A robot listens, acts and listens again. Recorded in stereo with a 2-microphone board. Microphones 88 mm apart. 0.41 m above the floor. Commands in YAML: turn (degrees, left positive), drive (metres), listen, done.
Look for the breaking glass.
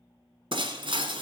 turn: -75
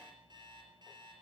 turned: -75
listen: true
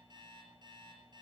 done: "I heard breaking glass, but can't make it out now. It was about straight ahead or 30° right."